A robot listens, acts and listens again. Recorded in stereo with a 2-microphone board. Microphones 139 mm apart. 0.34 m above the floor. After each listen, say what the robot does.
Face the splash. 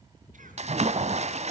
Turn 50° right.
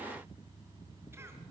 Keep listening.
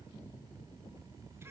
I heard a splash, but can't make it out now. It was about straight ahead or 80° right.